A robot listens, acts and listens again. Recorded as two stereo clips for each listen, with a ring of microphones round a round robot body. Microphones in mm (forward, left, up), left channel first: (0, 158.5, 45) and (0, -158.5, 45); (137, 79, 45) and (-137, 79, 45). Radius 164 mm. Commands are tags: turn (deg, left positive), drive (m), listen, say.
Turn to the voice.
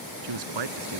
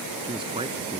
<turn deg="-105"/>
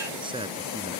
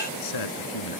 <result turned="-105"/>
<turn deg="-15"/>
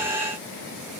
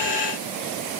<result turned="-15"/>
<listen/>
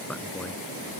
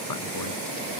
<listen/>
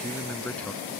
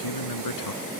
<say>Found it: a man speaking, straight ahead.</say>